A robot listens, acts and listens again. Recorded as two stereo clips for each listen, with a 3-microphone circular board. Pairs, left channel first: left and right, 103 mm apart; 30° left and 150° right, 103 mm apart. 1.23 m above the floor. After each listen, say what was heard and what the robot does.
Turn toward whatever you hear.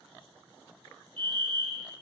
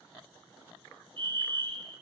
The fire alarm: 120° right. Turn 120° right.
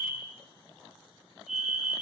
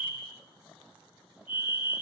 Facing the fire alarm, over 4 m away.